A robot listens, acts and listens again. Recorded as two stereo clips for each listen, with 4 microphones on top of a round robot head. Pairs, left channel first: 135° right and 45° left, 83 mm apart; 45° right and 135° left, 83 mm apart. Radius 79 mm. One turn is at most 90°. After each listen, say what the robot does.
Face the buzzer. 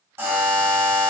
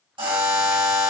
Turn 90° left.
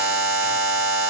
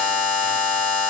Turn 25° left.
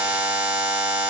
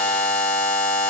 Turn 10° left.
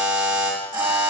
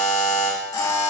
Facing the buzzer, 2 to 4 m away.